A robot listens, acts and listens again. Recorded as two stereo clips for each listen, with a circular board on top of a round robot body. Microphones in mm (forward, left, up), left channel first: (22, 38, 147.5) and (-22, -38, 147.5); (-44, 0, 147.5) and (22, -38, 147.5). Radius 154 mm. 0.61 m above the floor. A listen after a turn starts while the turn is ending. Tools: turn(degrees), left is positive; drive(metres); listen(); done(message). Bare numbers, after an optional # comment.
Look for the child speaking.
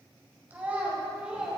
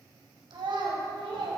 # The child speaking: 40° right.
turn(-40)
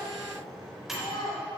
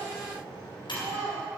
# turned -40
# The child speaking is now 20° left.
turn(20)
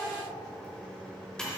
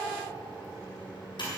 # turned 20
listen()
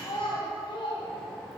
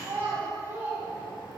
# The child speaking is now 35° left.
turn(35)
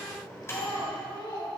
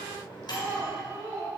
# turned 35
# The child speaking is now 25° left.
turn(25)
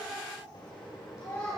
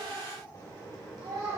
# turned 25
done("Found it: a child speaking, straight ahead.")